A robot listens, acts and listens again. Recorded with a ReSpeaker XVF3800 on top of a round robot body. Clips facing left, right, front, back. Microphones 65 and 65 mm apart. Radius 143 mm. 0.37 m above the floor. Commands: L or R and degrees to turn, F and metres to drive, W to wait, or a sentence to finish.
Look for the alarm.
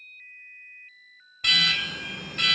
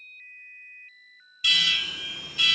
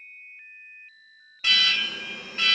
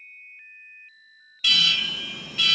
L55
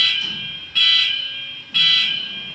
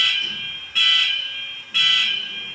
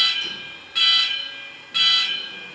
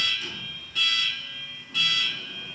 R10
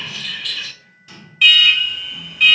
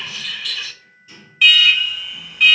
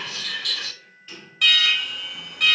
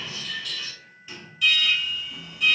Found it: an alarm, straight ahead.